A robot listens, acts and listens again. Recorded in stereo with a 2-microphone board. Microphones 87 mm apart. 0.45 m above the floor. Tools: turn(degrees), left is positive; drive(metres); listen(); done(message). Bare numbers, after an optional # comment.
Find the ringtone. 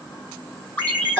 # The ringtone: about 20° left or 160° left.
turn(20)
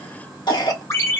# So it is at 145° left.
turn(145)
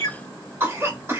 # The ringtone is now 35° left.
turn(35)
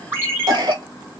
# The ringtone is now 30° right.
turn(-30)
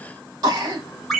done("Facing the ringtone, 1 to 2 m away.")